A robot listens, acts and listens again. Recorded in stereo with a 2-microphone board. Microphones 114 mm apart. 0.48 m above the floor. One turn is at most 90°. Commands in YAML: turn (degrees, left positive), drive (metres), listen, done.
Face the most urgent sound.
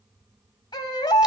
turn: 40
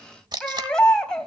done: "Found it: a baby crying, straight ahead, 2 to 4 m away."